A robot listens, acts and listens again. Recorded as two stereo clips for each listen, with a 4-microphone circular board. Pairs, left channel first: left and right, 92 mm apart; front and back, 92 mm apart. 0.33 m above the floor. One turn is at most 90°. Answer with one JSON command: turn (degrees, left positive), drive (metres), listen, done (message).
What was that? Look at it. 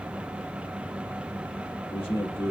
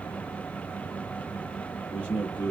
{"turn": 70}
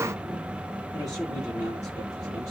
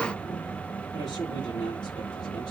{"listen": true}
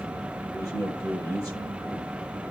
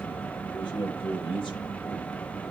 {"turn": 35}
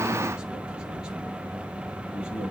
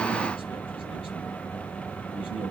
{"listen": true}
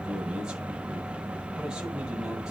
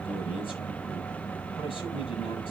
{"done": "Facing the man speaking, over 4 m away."}